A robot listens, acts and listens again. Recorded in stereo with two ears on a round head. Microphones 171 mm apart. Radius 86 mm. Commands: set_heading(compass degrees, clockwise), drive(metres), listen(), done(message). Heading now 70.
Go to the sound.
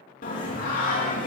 set_heading(25)
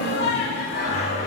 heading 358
set_heading(298)
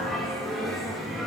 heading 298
drive(1.0)
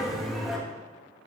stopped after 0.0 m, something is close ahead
done("Blocked. The singing is further on, straight ahead.")